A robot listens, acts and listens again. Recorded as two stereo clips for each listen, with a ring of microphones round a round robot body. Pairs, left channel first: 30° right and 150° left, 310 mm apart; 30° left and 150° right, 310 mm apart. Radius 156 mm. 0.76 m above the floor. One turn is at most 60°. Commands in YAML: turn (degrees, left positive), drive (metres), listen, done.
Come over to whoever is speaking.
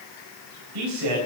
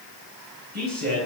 turn: 60
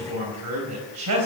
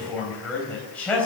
turn: 60
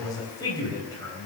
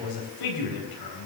turn: 50
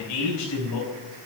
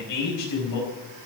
drive: 1.0
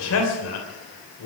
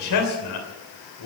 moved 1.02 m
turn: 10
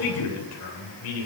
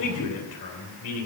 drive: 1.0
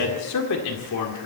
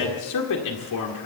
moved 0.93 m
drive: 1.0
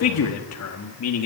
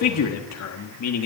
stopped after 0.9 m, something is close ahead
done: "I am next to the man speaking."